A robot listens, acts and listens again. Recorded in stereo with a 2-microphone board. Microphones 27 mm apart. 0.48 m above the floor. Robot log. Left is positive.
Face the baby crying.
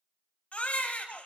note: The baby crying: about 55° left or 125° left.
cmd yaw +55
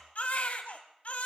note: So it is at 70° left.
cmd yaw +70
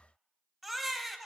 end: Facing the baby crying.